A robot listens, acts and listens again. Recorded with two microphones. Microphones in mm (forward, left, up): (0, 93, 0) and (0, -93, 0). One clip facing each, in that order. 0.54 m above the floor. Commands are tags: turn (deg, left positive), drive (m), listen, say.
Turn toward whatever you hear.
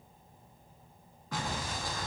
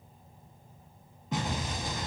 <turn deg="-20"/>
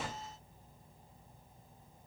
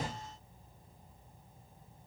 <turn deg="-135"/>
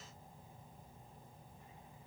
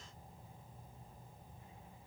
<say>I heard an explosion from this way, but can't make it out now.</say>